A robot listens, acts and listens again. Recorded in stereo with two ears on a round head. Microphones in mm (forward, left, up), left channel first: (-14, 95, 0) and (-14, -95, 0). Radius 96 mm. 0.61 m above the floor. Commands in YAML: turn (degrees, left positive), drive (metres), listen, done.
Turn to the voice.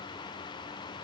listen: true
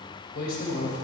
turn: 45
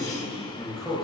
done: "Facing the man speaking, 2 to 4 m away."